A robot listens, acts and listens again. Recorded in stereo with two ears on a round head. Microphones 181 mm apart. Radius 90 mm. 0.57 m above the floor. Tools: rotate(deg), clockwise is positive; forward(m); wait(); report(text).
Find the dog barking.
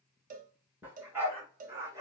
rotate(15)
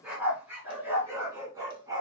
rotate(20)
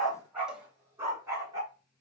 rotate(15)
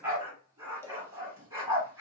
rotate(30)
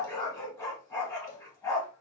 rotate(-15)
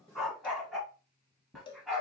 report("Facing the dog barking, 1 to 2 m away.")